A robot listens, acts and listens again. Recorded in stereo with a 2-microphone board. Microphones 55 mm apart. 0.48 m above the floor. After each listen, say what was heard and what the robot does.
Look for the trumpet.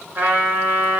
The trumpet: about 40° right or 140° right. Turn 40° right.
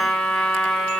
Facing the trumpet.